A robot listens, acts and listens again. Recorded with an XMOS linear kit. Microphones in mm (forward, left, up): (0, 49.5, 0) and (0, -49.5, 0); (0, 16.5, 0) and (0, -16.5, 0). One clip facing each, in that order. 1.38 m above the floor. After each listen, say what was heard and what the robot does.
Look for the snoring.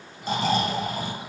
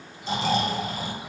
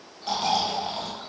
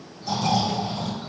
The snoring: about 45° left or 135° left. Turn 45° left.
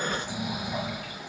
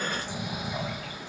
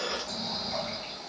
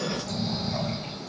Facing the snoring.